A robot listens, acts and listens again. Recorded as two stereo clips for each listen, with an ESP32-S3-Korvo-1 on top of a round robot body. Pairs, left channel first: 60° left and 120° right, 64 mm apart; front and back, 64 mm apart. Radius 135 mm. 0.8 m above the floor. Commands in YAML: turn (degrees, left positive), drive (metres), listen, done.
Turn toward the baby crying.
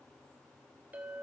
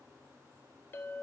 listen: true
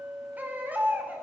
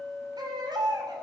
turn: 175
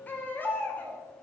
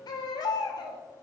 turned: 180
done: "Found it: a baby crying, straight ahead."